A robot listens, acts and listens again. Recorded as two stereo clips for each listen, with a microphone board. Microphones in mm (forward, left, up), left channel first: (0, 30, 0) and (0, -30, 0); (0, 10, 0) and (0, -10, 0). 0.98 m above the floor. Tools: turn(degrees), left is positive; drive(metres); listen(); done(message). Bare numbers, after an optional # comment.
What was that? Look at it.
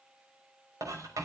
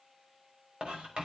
# The writing: about 75° right or 105° right.
turn(-75)
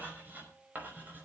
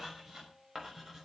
# So it is at 30° right.
turn(-30)
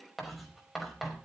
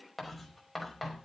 done("Facing the writing.")